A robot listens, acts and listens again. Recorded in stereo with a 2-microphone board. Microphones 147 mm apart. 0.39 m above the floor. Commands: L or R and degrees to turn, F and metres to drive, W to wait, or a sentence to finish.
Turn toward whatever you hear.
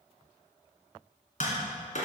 L55
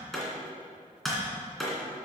Found it: tapping, straight ahead, 2 to 4 m away.